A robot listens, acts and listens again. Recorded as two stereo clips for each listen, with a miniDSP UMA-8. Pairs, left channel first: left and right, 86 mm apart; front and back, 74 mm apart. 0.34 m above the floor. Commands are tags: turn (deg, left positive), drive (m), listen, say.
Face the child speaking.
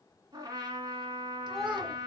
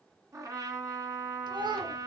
<turn deg="-175"/>
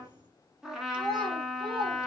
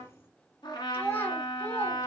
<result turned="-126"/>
<turn deg="-65"/>
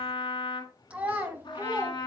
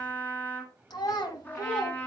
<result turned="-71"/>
<turn deg="-30"/>
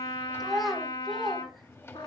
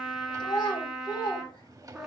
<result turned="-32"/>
<say>Found it: a child speaking, straight ahead.</say>